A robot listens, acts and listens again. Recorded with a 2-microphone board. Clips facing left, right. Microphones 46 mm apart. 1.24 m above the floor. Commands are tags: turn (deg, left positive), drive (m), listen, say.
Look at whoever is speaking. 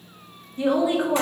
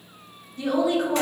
<turn deg="25"/>
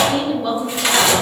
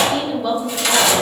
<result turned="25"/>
<say>Found it: a woman speaking, straight ahead.</say>